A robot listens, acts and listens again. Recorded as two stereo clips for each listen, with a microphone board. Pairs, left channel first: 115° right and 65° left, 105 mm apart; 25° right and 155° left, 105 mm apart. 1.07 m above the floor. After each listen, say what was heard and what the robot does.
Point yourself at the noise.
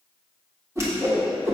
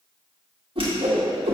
The whoosh: 130° left. Turn 130° left.
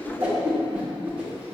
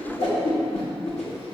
The whoosh is now 10° right. Turn 10° right.
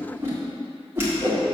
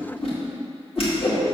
Facing the whoosh.